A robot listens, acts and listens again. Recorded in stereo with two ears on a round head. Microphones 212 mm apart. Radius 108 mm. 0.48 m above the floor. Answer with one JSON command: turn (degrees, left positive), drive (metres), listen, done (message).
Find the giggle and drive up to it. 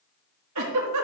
{"turn": -90}
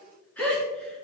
{"drive": 1.0}
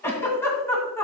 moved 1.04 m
{"turn": 10}
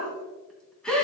{"drive": 1.0}
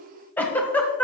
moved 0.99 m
{"drive": 1.0}
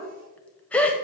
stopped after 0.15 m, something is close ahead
{"done": "I am next to the giggle."}